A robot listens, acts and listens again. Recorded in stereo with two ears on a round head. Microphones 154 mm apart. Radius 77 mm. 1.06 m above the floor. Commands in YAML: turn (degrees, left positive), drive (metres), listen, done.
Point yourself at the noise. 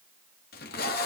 turn: 60
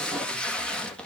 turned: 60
done: "Facing the tape being pulled, 1 to 2 m away."